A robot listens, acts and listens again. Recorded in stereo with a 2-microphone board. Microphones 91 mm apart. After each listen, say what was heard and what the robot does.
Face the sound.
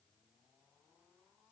Keep listening.
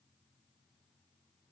Keep listening.
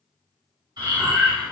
The breathing: about 50° right or 130° right. Turn 50° right.
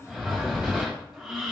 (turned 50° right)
So it is at 10° right. Turn 10° right.
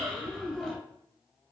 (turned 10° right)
Facing the breathing, 1 to 2 m away.